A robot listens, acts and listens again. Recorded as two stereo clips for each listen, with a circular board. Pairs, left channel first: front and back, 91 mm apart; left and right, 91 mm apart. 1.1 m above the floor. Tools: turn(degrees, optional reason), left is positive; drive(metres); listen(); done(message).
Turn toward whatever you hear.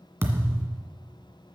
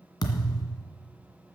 turn(degrees=120, reason="The thud: 120° left.")
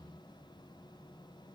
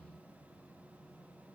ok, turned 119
done("I heard a thud from this way, but can't make it out now.")